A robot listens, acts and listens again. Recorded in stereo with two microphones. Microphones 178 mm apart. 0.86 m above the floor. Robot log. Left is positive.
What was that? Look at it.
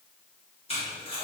note: The tape being pulled: about 35° left or 145° left.
cmd yaw +35
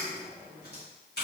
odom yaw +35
note: So it is at 110° left.
cmd yaw +110
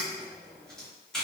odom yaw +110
end: Found it: tape being pulled, straight ahead.